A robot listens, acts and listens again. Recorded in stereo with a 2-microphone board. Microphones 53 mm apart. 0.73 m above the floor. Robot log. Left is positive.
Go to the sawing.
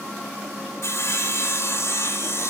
note: The sawing: about 60° left or 120° left.
cmd yaw +60
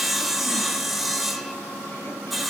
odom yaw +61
cmd fwd 1.0
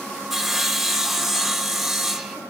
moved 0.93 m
cmd fwd 1.0
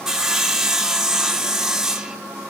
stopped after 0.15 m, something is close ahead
note: The sawing is now 10° right.
cmd yaw -10
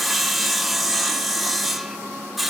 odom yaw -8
end: I am next to the sawing.